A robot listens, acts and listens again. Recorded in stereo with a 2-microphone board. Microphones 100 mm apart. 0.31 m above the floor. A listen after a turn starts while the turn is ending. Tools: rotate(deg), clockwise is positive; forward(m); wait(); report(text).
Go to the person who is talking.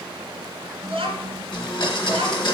rotate(65)
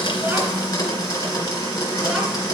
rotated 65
wait()
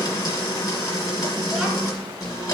wait()
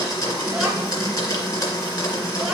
report("I heard a child speaking, but can't make it out now. It was about straight ahead or 50° right. I did not reach it.")